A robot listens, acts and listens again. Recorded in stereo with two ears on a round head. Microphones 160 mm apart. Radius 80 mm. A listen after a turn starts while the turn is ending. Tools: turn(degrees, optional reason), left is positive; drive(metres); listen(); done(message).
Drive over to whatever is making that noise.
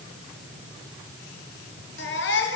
turn(degrees=70, reason="The baby crying: about 70° left or 110° left.")
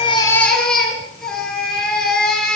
drive(metres=1.0)
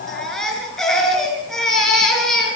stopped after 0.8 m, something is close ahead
done("Blocked. The baby crying is further on, straight ahead.")